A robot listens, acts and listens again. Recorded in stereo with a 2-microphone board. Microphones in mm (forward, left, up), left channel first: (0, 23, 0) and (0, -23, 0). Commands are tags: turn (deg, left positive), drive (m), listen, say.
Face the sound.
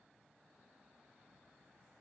<listen/>
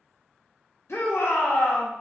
<turn deg="70"/>
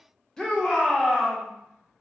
<turn deg="15"/>
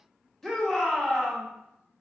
<say>Facing the shout, under 1 m away.</say>